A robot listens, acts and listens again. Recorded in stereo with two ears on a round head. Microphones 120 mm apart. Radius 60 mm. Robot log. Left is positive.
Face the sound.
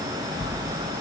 note: The bell: about 35° left or 145° left.
cmd yaw +35
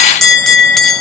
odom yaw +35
end: Found it: a bell, straight ahead, under 1 m away.